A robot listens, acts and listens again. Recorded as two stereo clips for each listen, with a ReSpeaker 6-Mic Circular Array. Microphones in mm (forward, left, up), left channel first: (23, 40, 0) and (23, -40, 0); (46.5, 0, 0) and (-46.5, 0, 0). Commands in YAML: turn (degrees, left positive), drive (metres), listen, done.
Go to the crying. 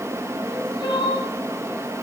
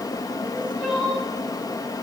turn: 100
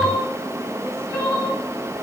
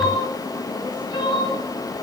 turn: 35
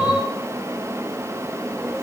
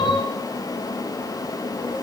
drive: 1.0
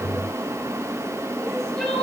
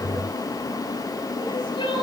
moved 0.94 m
turn: 10
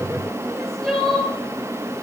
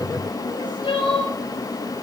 drive: 1.0
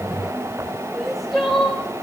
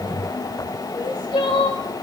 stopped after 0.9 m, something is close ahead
done: "Arrived at the crying, straight ahead."